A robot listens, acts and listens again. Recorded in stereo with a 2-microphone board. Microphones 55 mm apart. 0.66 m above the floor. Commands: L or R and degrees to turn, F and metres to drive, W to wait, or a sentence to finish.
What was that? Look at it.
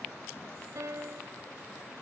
R90
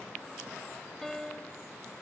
L10
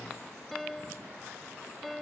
Facing the piano.